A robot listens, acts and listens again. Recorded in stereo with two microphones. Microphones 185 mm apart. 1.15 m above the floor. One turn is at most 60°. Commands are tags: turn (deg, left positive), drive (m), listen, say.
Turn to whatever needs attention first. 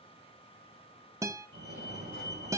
<turn deg="-60"/>
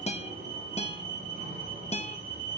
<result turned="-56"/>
<turn deg="-50"/>
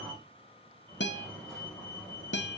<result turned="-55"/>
<say>Facing the fire alarm.</say>